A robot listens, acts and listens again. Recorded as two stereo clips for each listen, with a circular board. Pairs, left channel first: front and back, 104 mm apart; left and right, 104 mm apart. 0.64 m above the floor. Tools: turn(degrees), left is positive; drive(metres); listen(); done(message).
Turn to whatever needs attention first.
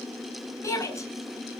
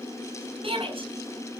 turn(degrees=-60)
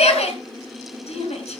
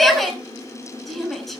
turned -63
done("Found it: a shout, straight ahead, over 4 m away.")